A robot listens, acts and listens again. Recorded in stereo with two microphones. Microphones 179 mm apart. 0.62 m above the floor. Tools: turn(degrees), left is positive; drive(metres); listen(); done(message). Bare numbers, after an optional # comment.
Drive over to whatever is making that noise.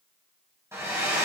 turn(-30)
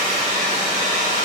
# So it is at 135° right.
turn(-135)
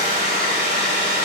# The hair dryer is now 45° right.
turn(-45)
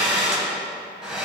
drive(1.0)
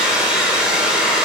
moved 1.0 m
drive(1.0)
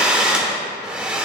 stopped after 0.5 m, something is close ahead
done("Arrived at the hair dryer, straight ahead.")